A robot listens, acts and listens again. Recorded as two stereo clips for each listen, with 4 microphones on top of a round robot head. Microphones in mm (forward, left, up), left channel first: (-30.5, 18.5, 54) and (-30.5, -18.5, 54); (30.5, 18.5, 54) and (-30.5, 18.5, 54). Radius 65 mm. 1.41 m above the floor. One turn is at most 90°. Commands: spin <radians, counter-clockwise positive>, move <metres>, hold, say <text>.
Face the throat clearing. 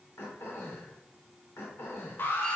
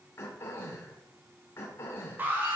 spin 0.87
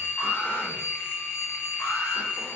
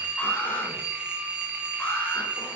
hold
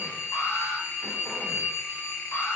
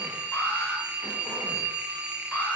hold
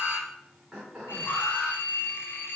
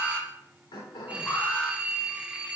say Found it: throat clearing, straight ahead, 2 to 4 m away.